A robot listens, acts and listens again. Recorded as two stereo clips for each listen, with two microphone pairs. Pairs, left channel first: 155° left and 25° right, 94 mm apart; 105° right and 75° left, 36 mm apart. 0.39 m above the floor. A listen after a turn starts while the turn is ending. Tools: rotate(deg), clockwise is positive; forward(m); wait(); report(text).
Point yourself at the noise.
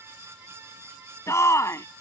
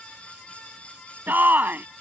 rotate(-100)
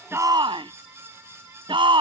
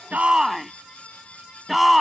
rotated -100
report("Found it: a shout, straight ahead.")